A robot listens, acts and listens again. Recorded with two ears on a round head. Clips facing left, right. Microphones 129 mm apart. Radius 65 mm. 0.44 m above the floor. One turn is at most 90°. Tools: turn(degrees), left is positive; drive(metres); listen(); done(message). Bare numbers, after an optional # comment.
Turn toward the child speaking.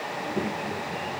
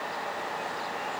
# The child speaking: about 70° left or 110° left.
turn(70)
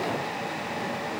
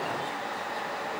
listen()
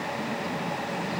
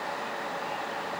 # So it is at 50° left.
turn(50)
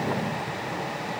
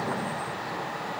# The child speaking is now 15° left.
turn(15)
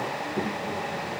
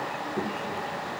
done("Found it: a child speaking, straight ahead.")